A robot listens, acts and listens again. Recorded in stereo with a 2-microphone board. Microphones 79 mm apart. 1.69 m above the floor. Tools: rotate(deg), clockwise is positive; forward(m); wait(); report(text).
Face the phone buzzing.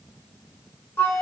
wait()
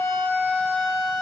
wait()
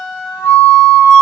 report("I can't make out a phone buzzing to turn to.")